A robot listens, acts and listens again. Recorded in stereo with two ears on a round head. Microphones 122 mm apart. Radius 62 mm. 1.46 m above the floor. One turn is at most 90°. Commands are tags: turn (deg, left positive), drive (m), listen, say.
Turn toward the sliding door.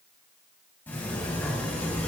<turn deg="15"/>
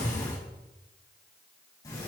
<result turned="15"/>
<turn deg="90"/>
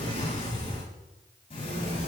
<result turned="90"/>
<turn deg="45"/>
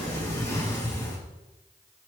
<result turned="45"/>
<turn deg="20"/>
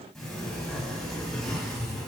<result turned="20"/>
<say>Found it: a sliding door, straight ahead.</say>